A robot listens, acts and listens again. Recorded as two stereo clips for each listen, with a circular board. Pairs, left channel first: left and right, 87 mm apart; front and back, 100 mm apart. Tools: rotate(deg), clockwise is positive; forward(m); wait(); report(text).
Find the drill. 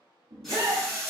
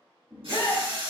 rotate(-175)
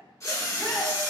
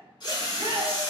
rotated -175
rotate(-40)
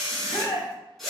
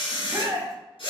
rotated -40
report("Facing the drill, 1 to 2 m away.")